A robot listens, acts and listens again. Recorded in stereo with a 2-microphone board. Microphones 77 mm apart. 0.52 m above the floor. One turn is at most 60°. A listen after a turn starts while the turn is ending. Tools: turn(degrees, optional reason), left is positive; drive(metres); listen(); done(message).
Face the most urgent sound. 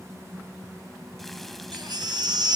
turn(degrees=-60, reason="The baby crying: about 65° right or 115° right.")
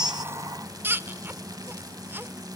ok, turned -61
turn(degrees=-30, reason="So it is at 30° right.")
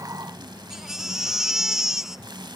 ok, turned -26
done("Found it: a baby crying, straight ahead, under 1 m away.")